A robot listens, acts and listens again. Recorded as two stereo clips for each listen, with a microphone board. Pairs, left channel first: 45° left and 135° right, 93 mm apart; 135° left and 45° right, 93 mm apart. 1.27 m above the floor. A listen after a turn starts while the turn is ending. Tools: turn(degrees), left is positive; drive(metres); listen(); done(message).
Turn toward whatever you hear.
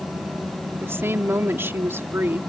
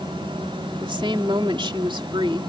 turn(degrees=-70)
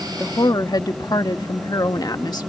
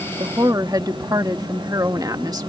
done("Found it: a woman speaking, straight ahead.")